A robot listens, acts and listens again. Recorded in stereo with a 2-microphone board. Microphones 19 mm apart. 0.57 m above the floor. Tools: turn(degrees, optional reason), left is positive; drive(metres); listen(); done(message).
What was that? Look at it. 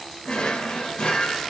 turn(degrees=60, reason="The drawer: about 60° left or 120° left.")
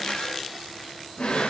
turn(degrees=60, reason="So it is at 60° left.")
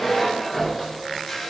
turn(degrees=10, reason="The drawer is now 10° left.")
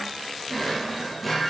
done("Found it: a drawer, straight ahead.")